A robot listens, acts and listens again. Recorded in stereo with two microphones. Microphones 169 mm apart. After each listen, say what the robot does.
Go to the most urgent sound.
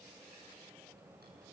Keep listening.
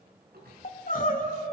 Turn 55° left.
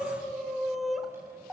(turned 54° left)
Drive 1.0 m forward.
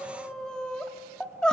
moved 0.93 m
Drive 1.0 m forward.
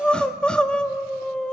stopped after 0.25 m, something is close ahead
I am next to the crying.